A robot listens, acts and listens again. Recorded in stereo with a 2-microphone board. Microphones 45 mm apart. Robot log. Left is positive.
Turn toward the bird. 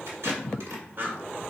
note: The bird: about 50° right or 130° right.
cmd yaw -50
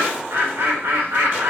note: So it is at 80° right.
cmd yaw -80
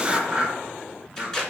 note: The bird is now 25° right.
cmd yaw -25
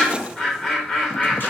end: Found it: a bird, straight ahead.